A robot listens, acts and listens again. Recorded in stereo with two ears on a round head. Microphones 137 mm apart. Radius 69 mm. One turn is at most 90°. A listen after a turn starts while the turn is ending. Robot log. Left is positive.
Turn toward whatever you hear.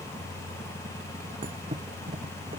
note: The thud: about 35° right or 145° right.
cmd yaw -35
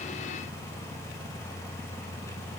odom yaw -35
cmd idle
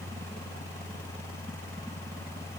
end: I heard a thud, but can't make it out now. It was about straight ahead or 110° right.